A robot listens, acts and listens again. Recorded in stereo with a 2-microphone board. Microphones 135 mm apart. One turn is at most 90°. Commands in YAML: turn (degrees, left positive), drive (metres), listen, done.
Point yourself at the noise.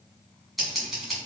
turn: 30
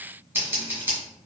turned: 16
turn: -15
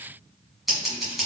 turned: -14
done: "Found it: scissors, straight ahead."